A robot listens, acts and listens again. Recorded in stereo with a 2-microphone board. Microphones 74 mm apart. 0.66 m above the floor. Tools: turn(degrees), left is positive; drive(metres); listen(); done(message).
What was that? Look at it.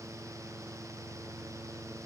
listen()
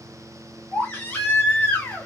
turn(degrees=20)
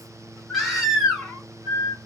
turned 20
done("Facing the baby crying, 1 to 2 m away.")